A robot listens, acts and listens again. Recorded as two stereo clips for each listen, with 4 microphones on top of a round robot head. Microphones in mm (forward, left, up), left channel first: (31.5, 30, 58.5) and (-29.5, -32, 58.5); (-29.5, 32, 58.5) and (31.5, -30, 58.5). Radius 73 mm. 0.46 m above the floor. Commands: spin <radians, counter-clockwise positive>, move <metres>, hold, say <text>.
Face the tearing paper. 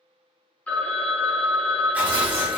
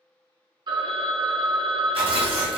spin -1.05
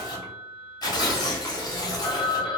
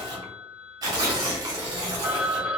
say Facing the tearing paper.